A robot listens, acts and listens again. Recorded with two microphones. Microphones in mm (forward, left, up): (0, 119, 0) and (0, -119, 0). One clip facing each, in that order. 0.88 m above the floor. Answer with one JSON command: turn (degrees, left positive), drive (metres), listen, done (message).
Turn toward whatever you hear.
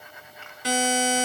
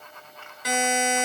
{"turn": 30}
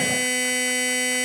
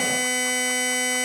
{"done": "Facing the buzzer."}